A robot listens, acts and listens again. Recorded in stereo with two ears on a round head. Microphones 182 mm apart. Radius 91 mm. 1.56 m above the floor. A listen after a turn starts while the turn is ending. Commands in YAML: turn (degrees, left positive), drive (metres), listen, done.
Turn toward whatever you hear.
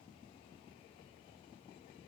listen: true
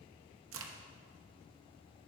turn: -70
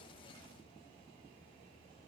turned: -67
listen: true
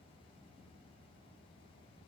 done: "I heard a crack, but can't make it out now. It was about 5° right or 40° right."